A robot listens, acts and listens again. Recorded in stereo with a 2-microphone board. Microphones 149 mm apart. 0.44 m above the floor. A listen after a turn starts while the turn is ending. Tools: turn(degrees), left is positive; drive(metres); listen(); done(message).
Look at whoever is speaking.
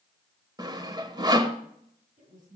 turn(degrees=-50)
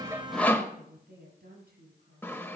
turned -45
turn(degrees=-80)
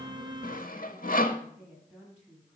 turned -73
done("Facing the woman speaking.")